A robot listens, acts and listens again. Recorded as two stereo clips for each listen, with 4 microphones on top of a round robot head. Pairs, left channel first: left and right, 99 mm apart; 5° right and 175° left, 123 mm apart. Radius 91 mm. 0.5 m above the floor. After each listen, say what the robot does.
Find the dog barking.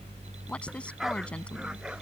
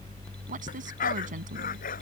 Facing the dog barking.